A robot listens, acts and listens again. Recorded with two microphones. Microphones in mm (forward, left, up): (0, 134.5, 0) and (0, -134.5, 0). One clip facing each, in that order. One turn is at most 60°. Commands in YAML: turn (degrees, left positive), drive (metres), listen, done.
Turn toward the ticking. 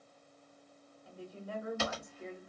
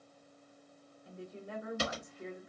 listen: true
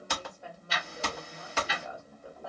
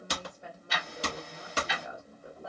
turn: -60
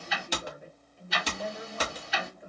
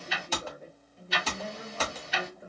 turn: -60
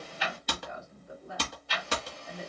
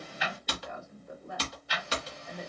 turn: -15
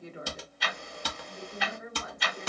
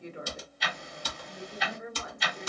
done: "Found it: ticking, straight ahead."